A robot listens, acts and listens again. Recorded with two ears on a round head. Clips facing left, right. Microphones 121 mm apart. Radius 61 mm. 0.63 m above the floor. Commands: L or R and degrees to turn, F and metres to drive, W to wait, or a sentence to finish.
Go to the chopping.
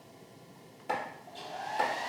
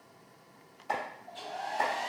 L70
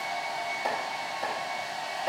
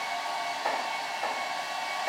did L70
W
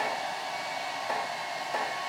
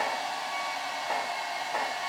L35
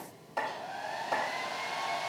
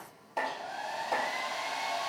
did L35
F1.0
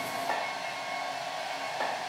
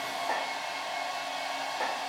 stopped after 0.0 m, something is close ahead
Something is in my way. I am facing the chopping but have not reached it.